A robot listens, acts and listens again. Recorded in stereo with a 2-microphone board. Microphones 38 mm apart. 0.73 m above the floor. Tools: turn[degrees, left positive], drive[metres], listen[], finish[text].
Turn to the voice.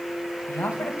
Action: turn[90]
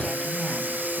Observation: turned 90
Action: listen[]
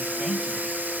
Action: listen[]
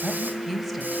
Action: finish[Found it: a woman speaking, straight ahead.]